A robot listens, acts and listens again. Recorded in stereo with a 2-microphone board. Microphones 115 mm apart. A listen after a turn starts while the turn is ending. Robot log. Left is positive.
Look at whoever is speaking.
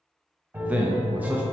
cmd yaw -30
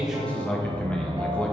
note: So it is at 10° left.
cmd yaw +10
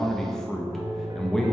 end: Facing the man speaking.